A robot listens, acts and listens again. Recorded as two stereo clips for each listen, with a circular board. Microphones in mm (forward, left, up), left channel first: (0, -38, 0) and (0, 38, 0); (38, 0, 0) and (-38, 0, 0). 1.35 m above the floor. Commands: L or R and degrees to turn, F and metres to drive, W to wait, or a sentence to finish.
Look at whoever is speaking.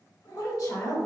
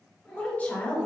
R65
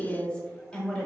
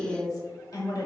R15
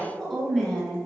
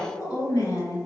Facing the woman speaking, 1 to 2 m away.